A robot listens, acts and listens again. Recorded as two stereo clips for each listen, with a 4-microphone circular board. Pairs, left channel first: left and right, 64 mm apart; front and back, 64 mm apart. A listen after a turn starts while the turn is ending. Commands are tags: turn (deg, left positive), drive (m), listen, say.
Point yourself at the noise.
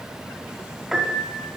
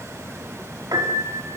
<turn deg="-175"/>
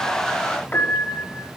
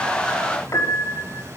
<turn deg="30"/>
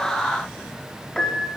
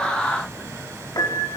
<turn deg="10"/>
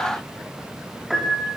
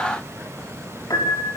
<say>Found it: a piano, straight ahead.</say>